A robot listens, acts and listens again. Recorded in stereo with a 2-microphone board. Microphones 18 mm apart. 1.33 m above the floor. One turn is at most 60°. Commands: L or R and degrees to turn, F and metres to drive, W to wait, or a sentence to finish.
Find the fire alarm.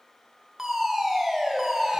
R25
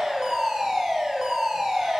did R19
R60
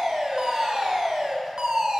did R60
R60
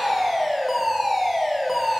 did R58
R15
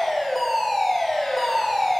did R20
Found it: a fire alarm, straight ahead, 1 to 2 m away.